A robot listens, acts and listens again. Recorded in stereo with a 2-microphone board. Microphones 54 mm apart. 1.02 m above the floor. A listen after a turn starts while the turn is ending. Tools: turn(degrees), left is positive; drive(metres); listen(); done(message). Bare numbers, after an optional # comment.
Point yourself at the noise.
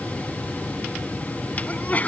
# The sneeze: about 35° left or 145° left.
turn(35)
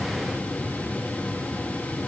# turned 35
listen()
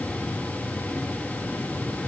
done("I heard a sneeze, but can't make it out now. It was about straight ahead or 110° left.")